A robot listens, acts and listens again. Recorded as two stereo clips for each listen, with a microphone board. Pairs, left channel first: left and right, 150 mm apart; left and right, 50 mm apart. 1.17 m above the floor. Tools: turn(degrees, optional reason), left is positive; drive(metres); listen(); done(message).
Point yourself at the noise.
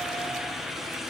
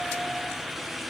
listen()
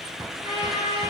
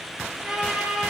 turn(degrees=-15, reason="The trumpet: about 15° right or 165° right.")
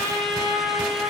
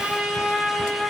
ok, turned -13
done("Facing the trumpet, over 4 m away.")